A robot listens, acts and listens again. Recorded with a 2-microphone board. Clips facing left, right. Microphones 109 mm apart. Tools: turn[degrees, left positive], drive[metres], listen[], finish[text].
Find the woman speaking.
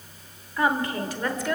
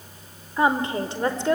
Thought: The woman speaking: about 30° right or 150° right.
Action: turn[-30]
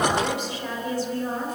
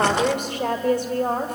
Thought: So it is at 115° right.
Action: turn[-115]
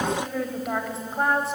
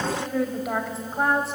Action: finish[Facing the woman speaking.]